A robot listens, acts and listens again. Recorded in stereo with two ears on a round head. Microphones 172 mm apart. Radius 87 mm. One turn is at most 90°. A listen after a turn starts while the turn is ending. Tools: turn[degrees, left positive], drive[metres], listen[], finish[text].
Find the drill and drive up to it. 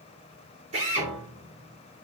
Thought: The drill: about 40° right or 140° right.
Action: turn[-40]
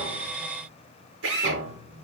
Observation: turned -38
Thought: So it is at 105° right.
Action: turn[-90]
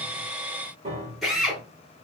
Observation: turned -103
Action: drive[1.0]
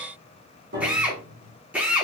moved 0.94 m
Action: drive[1.0]
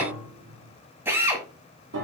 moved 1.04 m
Thought: The drill is now 10° right.
Action: turn[-10]
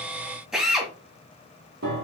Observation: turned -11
Action: drive[1.0]
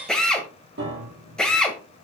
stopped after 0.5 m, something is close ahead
Action: finish[I am next to the drill.]